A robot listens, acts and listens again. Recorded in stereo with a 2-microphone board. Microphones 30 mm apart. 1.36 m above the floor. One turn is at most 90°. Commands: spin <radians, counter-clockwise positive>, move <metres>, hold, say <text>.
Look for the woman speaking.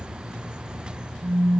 hold
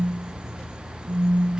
hold
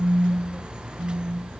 say I can't make out a woman speaking to turn to.